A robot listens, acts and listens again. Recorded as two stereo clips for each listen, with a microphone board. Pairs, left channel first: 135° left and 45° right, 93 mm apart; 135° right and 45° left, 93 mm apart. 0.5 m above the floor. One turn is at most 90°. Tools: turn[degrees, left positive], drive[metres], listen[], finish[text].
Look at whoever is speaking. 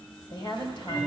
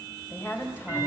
Thought: The woman speaking: 160° left.
Action: turn[90]
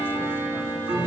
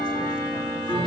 Thought: Nothing new. It was at 70° left.
Action: turn[70]
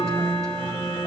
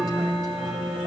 Action: listen[]
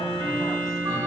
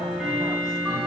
Action: finish[I heard a woman speaking from this way, but can't make it out now.]